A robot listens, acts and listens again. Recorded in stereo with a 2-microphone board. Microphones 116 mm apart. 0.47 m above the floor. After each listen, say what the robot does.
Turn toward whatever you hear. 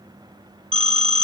Turn 55° right.
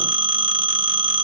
Turn 55° right.
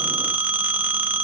Turn 15° right.
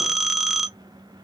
Facing the phone ringing.